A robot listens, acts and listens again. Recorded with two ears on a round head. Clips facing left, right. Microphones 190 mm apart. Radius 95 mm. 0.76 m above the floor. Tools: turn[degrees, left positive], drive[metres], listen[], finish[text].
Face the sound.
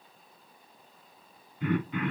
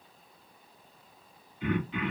Thought: The throat clearing: about 40° left or 140° left.
Action: turn[40]
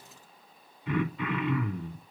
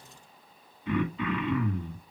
Action: finish[Found it: throat clearing, straight ahead.]